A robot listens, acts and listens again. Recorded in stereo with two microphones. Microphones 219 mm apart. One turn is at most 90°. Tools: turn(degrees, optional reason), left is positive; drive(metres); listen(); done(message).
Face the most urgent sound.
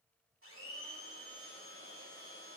listen()
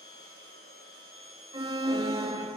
turn(degrees=-20, reason="The alarm: about 20° right or 160° right.")
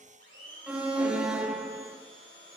done("Found it: an alarm, straight ahead, 1 to 2 m away.")